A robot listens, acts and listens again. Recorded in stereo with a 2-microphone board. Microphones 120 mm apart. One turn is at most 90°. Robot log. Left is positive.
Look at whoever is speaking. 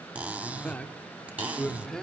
cmd yaw +30
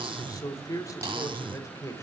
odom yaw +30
note: So it is at 155° left.
cmd yaw +90
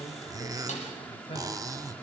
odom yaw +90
note: The man speaking is now 50° left.
cmd yaw +50
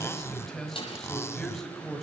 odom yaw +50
end: Found it: a man speaking, straight ahead, over 4 m away.